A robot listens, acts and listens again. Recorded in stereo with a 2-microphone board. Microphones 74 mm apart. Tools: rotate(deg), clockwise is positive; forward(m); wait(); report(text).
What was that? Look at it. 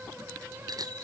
rotate(60)
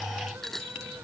report("Facing the bicycle bell.")